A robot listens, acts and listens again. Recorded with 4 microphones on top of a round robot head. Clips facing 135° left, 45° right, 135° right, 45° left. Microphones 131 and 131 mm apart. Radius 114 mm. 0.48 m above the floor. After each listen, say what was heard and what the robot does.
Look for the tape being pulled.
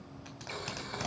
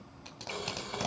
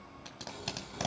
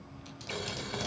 The tape being pulled: 110° right. Turn 110° right.
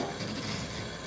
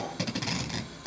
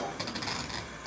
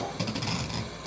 The tape being pulled is now 35° right. Turn 35° right.
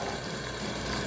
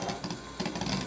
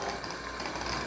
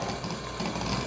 The tape being pulled is now 25° right. Turn 25° right.
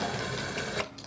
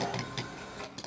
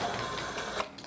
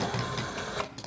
Found it: tape being pulled, straight ahead, 2 to 4 m away.